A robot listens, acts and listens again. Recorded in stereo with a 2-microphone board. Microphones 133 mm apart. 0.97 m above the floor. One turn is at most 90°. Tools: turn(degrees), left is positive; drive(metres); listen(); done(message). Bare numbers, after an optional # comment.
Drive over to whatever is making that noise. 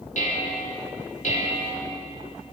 # The dishes clattering: about 70° left or 110° left.
turn(70)
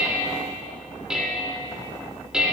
drive(1.0)
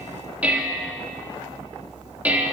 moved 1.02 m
# The dishes clattering is now 10° right.
turn(-10)
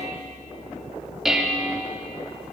drive(1.0)
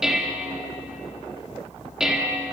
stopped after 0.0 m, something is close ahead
done("I am next to the dishes clattering.")